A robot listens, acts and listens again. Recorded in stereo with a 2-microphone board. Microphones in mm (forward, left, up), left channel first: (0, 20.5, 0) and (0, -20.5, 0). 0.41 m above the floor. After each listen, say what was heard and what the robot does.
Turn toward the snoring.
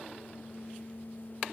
Keep listening.
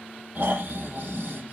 The snoring: about 45° right or 135° right. Turn 45° right.
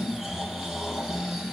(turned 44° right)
Found it: snoring, straight ahead.